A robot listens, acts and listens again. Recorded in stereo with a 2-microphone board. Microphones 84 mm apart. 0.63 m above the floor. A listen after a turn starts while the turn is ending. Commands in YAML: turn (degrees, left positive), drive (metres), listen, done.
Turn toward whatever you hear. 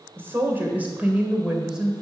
turn: -30
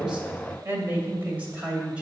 turn: -30
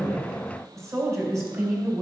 turn: -150
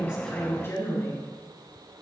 turn: 30
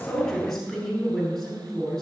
turn: 10
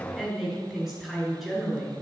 done: "Facing the woman speaking."